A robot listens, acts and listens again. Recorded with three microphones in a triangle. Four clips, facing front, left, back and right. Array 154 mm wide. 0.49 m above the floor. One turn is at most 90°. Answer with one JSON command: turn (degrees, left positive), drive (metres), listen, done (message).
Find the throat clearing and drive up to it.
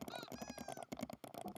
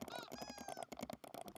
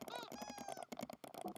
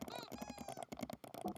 {"listen": true}
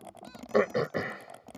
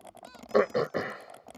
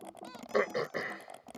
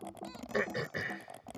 {"turn": 60}
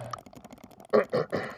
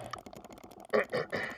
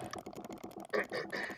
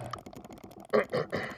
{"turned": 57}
{"drive": 1.0}
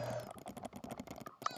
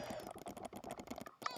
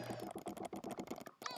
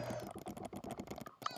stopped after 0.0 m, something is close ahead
{"done": "Blocked. The throat clearing is further on, straight ahead."}